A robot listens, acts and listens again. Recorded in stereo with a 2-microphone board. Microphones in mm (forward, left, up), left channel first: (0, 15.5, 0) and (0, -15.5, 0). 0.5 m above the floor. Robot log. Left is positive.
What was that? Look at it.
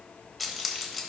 cmd yaw -30
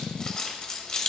note: So it is at 25° left.
cmd yaw +25
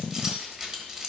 note: The keys jangling is now 20° right.
cmd yaw -20
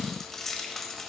end: Found it: keys jangling, straight ahead.